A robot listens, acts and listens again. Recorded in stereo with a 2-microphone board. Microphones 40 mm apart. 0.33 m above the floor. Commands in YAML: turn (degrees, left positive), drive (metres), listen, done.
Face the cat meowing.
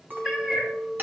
turn: -20
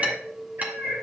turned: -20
turn: -110
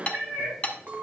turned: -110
turn: -30
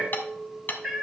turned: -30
done: "Facing the cat meowing."